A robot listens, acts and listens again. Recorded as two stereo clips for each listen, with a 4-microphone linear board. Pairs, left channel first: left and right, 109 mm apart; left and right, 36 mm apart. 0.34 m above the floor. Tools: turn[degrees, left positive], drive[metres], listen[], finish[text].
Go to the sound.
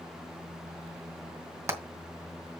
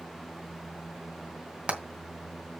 Thought: The hammering: about 30° right or 150° right.
Action: turn[-30]
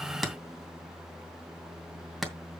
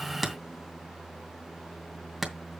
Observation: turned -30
Action: drive[1.0]
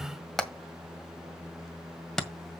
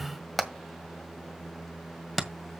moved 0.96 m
Action: drive[1.0]
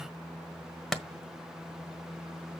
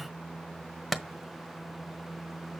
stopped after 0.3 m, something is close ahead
Action: finish[Arrived at the hammering, straight ahead.]